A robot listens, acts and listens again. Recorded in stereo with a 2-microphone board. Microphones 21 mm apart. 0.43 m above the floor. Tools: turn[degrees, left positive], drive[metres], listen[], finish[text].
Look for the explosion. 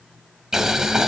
Action: listen[]
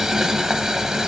Action: listen[]
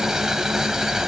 Action: finish[I can't make out an explosion to turn to.]